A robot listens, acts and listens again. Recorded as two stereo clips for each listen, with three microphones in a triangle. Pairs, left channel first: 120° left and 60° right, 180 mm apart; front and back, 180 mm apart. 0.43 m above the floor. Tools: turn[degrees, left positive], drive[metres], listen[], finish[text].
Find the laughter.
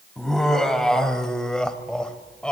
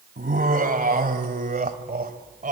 Thought: The laughter: 155° right.
Action: turn[-155]
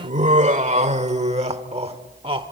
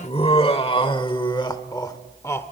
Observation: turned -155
Thought: The laughter is now 60° right.
Action: turn[-60]
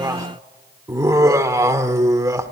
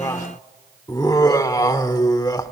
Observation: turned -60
Thought: The laughter is now 25° right.
Action: turn[-25]
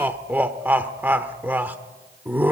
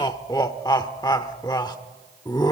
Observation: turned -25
Action: finish[Found it: laughter, straight ahead, 1 to 2 m away.]